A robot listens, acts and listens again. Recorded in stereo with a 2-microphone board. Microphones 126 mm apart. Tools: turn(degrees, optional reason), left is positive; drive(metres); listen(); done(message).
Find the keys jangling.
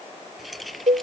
turn(degrees=30)
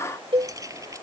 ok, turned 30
turn(degrees=-25, reason="So it is at 25° right.")
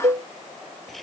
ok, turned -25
done("Facing the keys jangling.")